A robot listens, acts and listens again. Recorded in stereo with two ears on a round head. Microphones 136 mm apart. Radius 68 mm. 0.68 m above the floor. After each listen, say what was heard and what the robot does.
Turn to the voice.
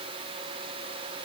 Keep listening.
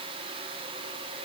Keep listening.
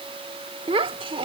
The child speaking: about 35° right or 145° right. Turn 35° right.
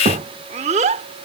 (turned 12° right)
So it is at 130° right. Turn 130° right.
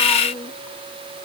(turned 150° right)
The child speaking is now 15° left. Turn 15° left.
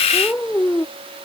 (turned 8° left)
The child speaking is now 10° left. Turn 10° left.
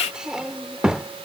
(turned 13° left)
Facing the child speaking.